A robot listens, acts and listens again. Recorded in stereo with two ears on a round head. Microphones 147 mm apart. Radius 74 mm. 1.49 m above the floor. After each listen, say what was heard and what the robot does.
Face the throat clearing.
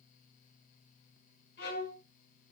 Keep listening.
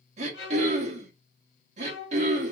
The throat clearing: about 40° right or 140° right. Turn 40° right.
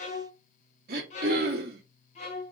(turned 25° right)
So it is at 110° right. Turn 110° right.
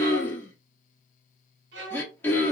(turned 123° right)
The throat clearing is now 15° left. Turn 15° left.
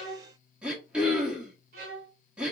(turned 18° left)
Found it: throat clearing, straight ahead.